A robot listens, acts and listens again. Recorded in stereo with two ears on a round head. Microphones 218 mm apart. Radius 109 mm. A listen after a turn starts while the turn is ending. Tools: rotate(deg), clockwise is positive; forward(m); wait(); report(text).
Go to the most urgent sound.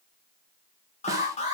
rotate(-30)
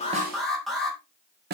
forward(1.0)
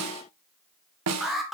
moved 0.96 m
forward(1.0)
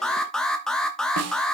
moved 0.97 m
forward(1.0)
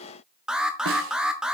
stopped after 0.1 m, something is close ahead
report("Arrived at the alarm, straight ahead.")